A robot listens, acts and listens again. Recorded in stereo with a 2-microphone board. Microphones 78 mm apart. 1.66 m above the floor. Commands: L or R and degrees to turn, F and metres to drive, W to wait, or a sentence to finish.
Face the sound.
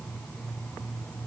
W
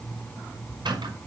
R90
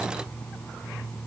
W
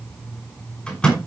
L10
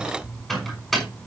Found it: a microwave, straight ahead, over 4 m away.